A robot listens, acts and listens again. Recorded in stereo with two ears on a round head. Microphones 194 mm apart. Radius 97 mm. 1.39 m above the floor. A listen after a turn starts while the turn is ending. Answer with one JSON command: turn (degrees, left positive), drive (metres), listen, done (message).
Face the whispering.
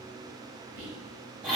{"turn": -90}
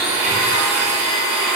{"listen": true}
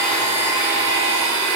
{"listen": true}
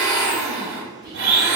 {"done": "Found it: whispering, straight ahead, 1 to 2 m away."}